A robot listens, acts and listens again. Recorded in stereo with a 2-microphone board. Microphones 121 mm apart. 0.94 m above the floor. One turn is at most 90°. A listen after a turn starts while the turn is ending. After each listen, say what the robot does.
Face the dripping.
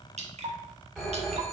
Turn 60° right.
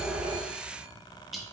Found it: dripping, straight ahead, under 1 m away.